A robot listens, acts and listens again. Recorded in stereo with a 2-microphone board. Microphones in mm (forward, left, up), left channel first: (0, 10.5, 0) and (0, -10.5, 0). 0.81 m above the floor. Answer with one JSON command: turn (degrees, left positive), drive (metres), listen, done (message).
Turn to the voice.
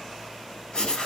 {"listen": true}
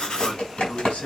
{"turn": 90}
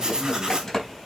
{"listen": true}
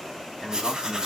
{"done": "Found it: a man speaking, straight ahead."}